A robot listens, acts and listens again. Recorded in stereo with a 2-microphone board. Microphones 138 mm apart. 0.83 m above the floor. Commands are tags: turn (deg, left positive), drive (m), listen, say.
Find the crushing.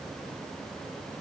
<listen/>
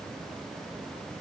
<listen/>
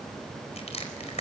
<turn deg="50"/>
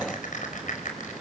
<turn deg="75"/>
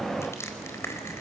<turn deg="20"/>
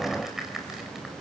<say>Found it: crushing, straight ahead, over 4 m away.</say>